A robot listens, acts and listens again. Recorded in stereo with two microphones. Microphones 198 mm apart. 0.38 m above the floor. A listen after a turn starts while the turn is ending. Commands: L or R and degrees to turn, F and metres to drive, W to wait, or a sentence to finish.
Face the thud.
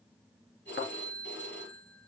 L90
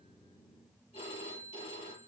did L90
Facing where the thud came from. I can't hear it now.